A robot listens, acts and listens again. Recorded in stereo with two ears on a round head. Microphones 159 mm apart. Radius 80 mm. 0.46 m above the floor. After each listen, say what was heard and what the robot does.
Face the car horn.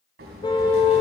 The car horn: about 25° left or 155° left. Turn 25° left.
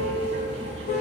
So it is at 130° left. Turn 130° left.
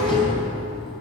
Keep listening.
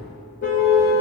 The car horn is now 50° left. Turn 50° left.
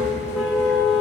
Found it: a car horn, straight ahead.